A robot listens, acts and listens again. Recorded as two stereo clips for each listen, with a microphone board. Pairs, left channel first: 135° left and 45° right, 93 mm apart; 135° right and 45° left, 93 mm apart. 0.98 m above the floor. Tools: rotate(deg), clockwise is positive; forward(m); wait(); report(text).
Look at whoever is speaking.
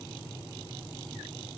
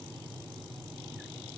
wait()
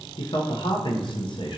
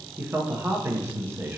rotate(-110)
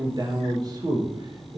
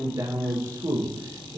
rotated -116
report("Facing the man speaking, under 1 m away.")